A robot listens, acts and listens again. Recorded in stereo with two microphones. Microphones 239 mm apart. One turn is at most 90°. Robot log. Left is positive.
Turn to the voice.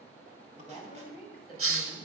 note: The woman speaking: about 25° left or 155° left.
cmd yaw +25
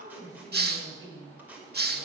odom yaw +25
note: So it is at 130° left.
cmd yaw +90
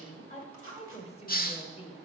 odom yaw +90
note: The woman speaking is now 20° left.
cmd yaw +20
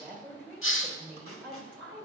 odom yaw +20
end: Facing the woman speaking.